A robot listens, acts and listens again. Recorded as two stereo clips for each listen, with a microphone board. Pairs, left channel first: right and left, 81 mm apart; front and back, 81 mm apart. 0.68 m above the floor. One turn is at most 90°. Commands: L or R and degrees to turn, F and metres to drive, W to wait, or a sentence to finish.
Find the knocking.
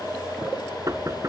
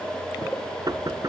L90
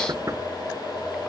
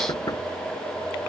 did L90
L50
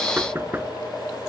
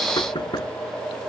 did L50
L25
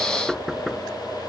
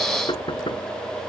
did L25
Found it: knocking, straight ahead.